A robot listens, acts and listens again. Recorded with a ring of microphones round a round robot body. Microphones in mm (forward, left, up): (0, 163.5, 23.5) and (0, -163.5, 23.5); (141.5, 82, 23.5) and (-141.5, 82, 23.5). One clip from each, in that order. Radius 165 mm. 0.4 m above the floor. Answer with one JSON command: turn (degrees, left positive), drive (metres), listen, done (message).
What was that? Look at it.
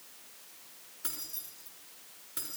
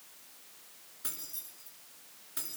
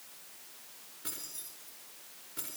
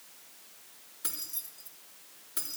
{"turn": -175}
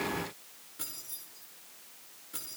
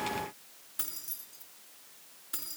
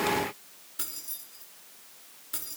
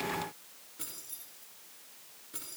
{"turn": -45}
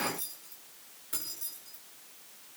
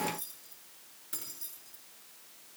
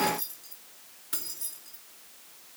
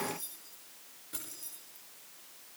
{"done": "Facing the keys jangling."}